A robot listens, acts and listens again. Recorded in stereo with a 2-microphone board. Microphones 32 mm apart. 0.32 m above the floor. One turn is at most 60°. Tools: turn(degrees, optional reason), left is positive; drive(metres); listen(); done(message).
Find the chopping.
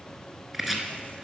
turn(degrees=-30)
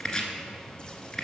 turn(degrees=20, reason="So it is at 20° left.")
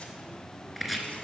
done("Found it: chopping, straight ahead, under 1 m away.")